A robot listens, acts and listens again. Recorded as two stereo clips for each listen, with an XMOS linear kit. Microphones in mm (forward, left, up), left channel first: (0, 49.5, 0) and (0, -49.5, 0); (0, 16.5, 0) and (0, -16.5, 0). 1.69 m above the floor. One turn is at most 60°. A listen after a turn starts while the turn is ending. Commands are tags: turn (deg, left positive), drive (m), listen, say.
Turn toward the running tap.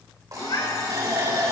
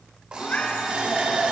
<turn deg="-40"/>
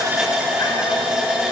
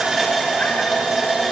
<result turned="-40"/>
<turn deg="-10"/>
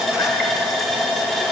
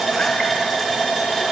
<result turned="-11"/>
<say>Facing the running tap.</say>